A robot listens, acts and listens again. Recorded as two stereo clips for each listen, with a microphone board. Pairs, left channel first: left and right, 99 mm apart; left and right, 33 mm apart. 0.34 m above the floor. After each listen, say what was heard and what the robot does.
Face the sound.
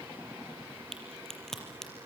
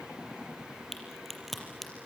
Turn 30° left.
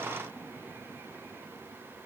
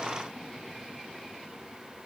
Keep listening.
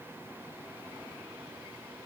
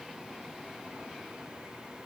I heard a crack, but can't make it out now. It was about 25° right or 145° left.